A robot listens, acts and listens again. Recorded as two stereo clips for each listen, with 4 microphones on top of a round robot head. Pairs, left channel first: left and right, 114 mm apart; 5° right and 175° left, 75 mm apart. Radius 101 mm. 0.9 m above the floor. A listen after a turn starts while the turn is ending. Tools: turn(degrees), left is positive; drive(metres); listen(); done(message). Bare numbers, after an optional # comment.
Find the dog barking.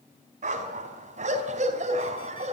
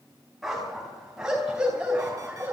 # The dog barking: 105° right.
turn(-105)
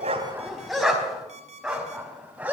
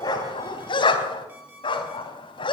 # The dog barking is now 10° right.
turn(-10)
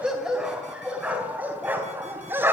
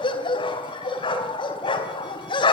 # The dog barking is now 15° right.
turn(-15)
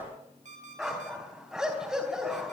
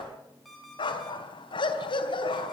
done("Facing the dog barking, 2 to 4 m away.")